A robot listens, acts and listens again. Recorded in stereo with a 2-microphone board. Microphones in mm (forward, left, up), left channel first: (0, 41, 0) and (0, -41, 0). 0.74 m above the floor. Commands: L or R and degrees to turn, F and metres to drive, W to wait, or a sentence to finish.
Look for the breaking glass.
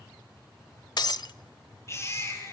L60
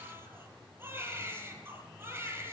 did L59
W
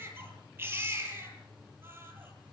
I heard breaking glass, but can't make it out now. It was about straight ahead or 60° left.